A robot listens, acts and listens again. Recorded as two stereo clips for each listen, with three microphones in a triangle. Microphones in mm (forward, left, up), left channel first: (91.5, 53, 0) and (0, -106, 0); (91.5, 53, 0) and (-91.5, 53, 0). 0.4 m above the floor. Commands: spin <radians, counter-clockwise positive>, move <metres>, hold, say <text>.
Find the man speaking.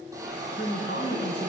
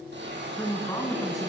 spin 1.22
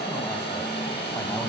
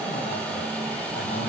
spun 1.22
hold
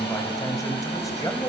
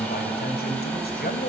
spin -0.17
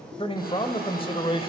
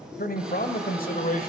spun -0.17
spin 0.17
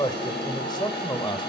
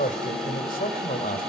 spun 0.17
say Found it: a man speaking, straight ahead, 2 to 4 m away.